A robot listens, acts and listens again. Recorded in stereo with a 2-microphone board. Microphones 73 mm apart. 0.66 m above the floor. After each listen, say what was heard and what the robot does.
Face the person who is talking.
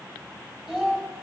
Turn 30° right.
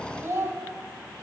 So it is at 135° right. Turn 135° right.
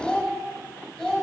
The child speaking is now 15° left. Turn 15° left.
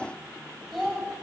Found it: a child speaking, straight ahead.